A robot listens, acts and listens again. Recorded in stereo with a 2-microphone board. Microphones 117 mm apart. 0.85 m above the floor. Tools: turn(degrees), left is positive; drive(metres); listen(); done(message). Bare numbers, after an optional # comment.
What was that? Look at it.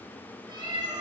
# The cat meowing: about 45° right or 135° right.
turn(-45)
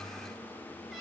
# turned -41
done("Found it: a cat meowing, straight ahead, 2 to 4 m away.")